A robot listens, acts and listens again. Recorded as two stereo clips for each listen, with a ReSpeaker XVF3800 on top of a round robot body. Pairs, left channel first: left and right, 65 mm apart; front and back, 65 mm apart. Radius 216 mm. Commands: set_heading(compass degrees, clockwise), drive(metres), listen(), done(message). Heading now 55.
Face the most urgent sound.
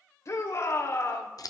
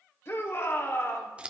set_heading(5)
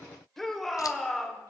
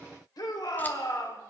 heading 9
done("Facing the shout, 2 to 4 m away.")